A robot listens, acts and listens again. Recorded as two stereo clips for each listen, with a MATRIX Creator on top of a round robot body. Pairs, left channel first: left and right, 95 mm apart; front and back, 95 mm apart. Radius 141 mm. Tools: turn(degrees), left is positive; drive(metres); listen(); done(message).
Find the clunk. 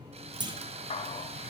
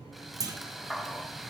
turn(degrees=-130)
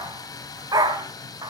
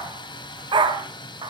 done("Facing where the clunk came from. I can't hear it now.")